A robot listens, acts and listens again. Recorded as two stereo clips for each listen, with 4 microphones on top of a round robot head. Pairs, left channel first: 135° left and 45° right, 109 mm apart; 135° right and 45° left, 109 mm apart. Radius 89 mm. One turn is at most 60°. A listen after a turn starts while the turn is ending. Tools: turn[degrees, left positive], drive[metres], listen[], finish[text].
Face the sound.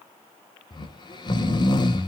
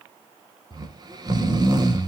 Thought: The snoring: 95° left.
Action: turn[60]
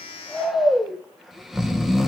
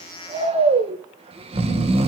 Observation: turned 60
Thought: The snoring is now 40° left.
Action: turn[40]
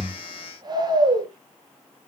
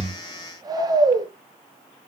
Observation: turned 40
Action: finish[Facing the snoring.]